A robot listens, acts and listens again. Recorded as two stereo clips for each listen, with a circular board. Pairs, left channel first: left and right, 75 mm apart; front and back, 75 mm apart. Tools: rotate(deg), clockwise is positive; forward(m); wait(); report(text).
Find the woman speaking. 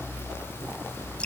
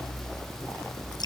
wait()
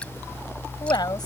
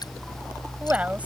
rotate(-110)
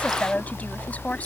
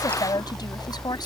rotate(-20)
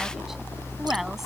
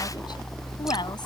wait()
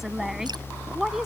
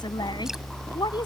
report("Facing the woman speaking.")